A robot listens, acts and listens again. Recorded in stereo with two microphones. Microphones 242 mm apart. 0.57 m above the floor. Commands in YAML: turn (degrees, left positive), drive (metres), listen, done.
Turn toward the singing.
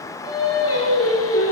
turn: 75
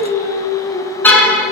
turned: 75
turn: 40
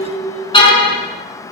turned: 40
turn: 30
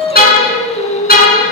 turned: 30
turn: 30
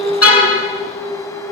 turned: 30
done: "Facing the singing."